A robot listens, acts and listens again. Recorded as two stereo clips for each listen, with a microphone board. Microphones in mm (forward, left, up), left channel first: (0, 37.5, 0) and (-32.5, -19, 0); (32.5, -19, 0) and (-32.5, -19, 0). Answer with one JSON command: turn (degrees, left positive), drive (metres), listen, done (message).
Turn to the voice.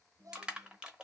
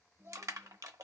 {"turn": -135}
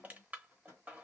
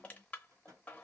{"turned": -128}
{"turn": -10}
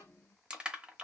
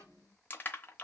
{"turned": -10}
{"done": "Found it: a child speaking, straight ahead, under 1 m away."}